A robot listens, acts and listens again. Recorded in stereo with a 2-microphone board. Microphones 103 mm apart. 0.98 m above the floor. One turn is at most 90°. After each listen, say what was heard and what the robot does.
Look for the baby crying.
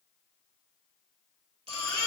The baby crying: about 75° right or 105° right. Turn 75° right.
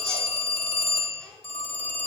Keep listening.
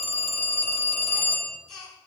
Found it: a baby crying, straight ahead.